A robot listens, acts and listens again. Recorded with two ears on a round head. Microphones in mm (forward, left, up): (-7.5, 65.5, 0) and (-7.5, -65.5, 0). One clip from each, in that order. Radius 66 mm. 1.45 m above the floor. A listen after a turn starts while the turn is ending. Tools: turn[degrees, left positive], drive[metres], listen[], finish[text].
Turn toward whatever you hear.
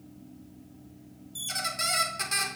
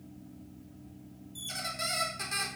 Thought: The squeak: about 25° left or 155° left.
Action: turn[25]
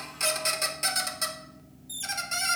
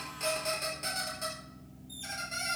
Thought: So it is at 130° left.
Action: turn[130]
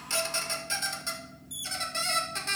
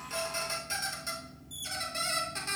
Thought: The squeak is now 10° left.
Action: turn[10]
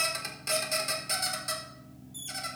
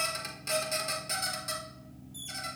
Action: finish[Facing the squeak, under 1 m away.]